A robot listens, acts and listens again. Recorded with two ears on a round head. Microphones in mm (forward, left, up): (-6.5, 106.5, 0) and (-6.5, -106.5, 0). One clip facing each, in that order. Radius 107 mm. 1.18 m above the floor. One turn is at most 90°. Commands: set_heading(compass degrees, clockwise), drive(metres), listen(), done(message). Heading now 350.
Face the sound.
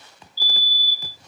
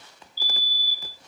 set_heading(35)
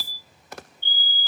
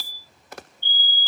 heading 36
set_heading(111)
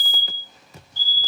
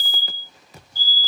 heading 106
done("Facing the fire alarm.")